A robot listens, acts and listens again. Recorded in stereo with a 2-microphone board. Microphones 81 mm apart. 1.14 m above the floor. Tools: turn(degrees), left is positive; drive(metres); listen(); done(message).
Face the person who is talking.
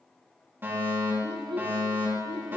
turn(degrees=-70)
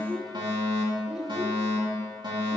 done("Found it: a child speaking, straight ahead, 1 to 2 m away.")